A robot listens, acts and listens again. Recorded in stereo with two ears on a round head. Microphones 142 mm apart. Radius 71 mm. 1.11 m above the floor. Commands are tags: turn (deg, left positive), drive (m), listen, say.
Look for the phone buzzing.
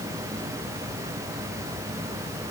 <listen/>
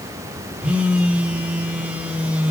<turn deg="-30"/>
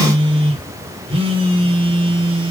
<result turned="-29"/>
<turn deg="-140"/>
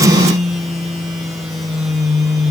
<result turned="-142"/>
<say>Found it: a phone buzzing, straight ahead, 1 to 2 m away.</say>